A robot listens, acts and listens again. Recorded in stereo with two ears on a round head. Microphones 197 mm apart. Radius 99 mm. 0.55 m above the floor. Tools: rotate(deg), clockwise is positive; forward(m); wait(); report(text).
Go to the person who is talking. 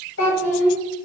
rotate(-60)
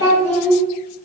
rotate(-60)
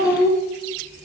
rotate(-30)
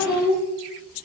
rotate(10)
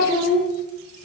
forward(1.0)
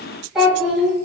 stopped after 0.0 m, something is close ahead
report("Something is in my way. I am facing the child speaking but have not reached it.")